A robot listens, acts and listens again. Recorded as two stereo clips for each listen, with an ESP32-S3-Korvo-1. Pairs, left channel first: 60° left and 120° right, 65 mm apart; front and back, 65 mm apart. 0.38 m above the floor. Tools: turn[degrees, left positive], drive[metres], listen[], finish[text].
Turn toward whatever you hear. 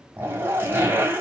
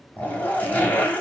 Thought: The zipper: 65° right.
Action: turn[-65]
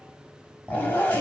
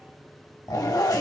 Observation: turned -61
Action: finish[Found it: a zipper, straight ahead.]